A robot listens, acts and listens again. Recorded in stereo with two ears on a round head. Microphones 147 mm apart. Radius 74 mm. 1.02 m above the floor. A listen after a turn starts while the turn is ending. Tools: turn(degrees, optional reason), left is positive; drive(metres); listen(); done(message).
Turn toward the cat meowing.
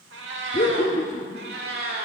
turn(degrees=-65, reason="The cat meowing: about 65° right or 115° right.")
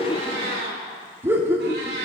turn(degrees=-70, reason="So it is at 70° right.")
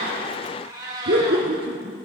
turn(degrees=-25, reason="The cat meowing is now 25° right.")
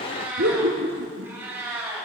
turn(degrees=-15, reason="The cat meowing is now 15° right.")
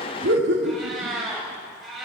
done("Found it: a cat meowing, straight ahead, 2 to 4 m away.")